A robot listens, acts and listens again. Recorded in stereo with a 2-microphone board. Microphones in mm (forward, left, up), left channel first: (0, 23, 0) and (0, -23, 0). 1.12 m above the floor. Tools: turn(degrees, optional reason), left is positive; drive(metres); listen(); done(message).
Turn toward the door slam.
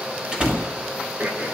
turn(degrees=-15, reason="The door slam: about 15° right or 165° right.")
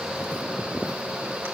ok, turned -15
listen()
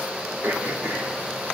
done("I heard a door slam, but can't make it out now. It was about straight ahead or 150° right.")